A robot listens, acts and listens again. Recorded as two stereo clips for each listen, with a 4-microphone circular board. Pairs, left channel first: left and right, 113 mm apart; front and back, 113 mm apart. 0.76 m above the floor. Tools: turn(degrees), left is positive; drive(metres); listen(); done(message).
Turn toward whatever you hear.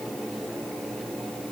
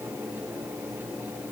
listen()
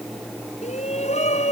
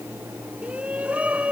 turn(degrees=100)
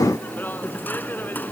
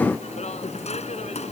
turn(degrees=15)
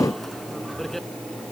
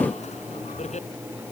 done("Facing the shout.")